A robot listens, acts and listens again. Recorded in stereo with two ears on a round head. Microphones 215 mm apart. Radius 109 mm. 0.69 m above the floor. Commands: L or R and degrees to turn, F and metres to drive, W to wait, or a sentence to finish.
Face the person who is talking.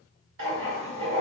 W
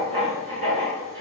W
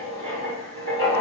I can't make out anyone speaking to turn to.